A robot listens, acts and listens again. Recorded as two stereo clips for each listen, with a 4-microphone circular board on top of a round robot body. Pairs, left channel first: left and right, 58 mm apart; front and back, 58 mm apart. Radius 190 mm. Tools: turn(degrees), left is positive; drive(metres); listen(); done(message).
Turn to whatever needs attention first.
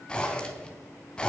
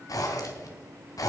listen()
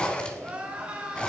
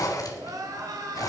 turn(degrees=-160)
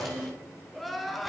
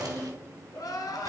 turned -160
done("Found it: crying, straight ahead, 2 to 4 m away.")